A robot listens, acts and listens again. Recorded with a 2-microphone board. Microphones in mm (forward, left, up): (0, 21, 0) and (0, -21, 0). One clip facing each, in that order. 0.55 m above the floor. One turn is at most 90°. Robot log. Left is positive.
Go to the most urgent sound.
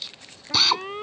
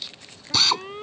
note: The alarm: about 20° left or 160° left.
cmd yaw +20
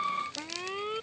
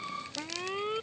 cmd fwd 1.0
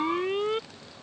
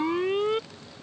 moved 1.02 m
cmd fwd 1.0
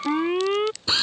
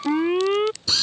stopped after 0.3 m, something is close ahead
end: I am next to the alarm.